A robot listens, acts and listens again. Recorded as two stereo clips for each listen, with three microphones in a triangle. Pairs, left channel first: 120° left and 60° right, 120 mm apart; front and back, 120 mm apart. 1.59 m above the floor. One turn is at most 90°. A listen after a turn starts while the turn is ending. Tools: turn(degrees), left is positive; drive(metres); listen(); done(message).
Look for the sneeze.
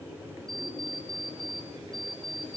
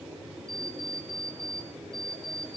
listen()
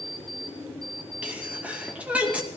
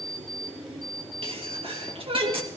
turn(degrees=-90)
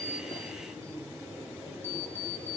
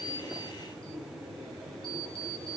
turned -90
turn(degrees=-50)
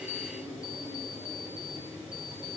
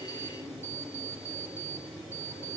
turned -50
done("Facing where the sneeze came from. I can't hear it now.")